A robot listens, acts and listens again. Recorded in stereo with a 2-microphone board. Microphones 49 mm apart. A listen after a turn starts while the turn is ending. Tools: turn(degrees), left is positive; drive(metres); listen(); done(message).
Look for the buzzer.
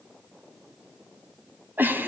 listen()
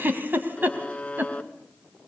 turn(degrees=30)
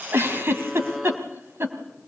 listen()
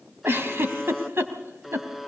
done("Facing the buzzer, 1 to 2 m away.")